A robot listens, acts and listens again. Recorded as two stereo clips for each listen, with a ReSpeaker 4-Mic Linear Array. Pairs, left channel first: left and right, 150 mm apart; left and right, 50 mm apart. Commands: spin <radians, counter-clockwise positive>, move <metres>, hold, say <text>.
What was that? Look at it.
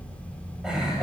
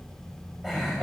spin -0.52
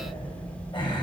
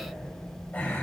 spin 0.61
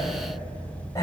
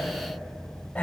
spin 0.35
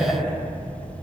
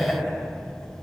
spin 0.17
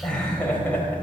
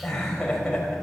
spin 0.17
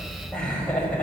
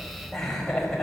say Facing the laughter, over 4 m away.